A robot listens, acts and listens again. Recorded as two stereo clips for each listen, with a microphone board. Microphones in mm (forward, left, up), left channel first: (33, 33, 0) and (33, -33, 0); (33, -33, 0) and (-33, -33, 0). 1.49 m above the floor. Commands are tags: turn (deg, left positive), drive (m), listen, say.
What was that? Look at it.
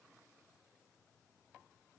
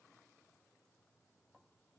<listen/>
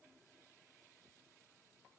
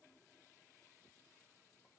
<listen/>
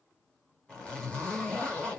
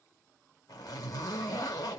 <turn deg="15"/>
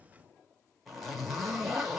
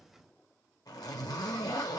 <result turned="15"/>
<say>Facing the zipper.</say>